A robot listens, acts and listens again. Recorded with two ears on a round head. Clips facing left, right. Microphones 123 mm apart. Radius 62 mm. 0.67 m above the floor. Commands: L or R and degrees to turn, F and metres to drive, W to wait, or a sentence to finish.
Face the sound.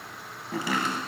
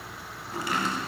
L70
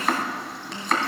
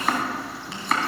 Found it: chopping, straight ahead, 1 to 2 m away.